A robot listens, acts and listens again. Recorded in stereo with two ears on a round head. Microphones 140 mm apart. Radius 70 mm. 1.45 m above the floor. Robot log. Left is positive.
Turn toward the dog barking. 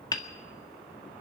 cmd idle
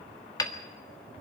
cmd idle
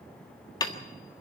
end: I can't make out a dog barking, only hammering.